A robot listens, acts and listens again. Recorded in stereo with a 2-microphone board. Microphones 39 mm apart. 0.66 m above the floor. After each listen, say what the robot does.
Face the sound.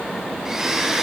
Turn 15° right.
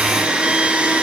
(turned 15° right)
Turn 150° right.
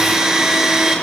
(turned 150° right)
Turn 10° right.
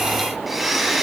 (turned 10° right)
Found it: a blender, straight ahead.